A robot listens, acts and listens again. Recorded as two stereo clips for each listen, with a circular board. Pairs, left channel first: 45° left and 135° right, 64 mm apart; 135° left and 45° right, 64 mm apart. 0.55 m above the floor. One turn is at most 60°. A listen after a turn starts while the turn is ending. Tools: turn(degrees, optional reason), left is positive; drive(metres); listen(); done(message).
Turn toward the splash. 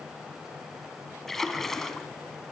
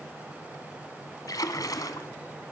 turn(degrees=60, reason="The splash: 130° left.")
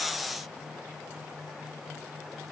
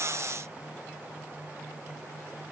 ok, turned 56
turn(degrees=60, reason="Nothing new. It was at 70° left.")
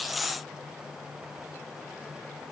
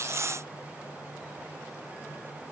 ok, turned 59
turn(degrees=15, reason="Nothing new. It was at 15° left.")
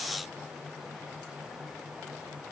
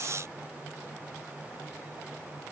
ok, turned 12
done("Facing where the splash came from. I can't hear it now.")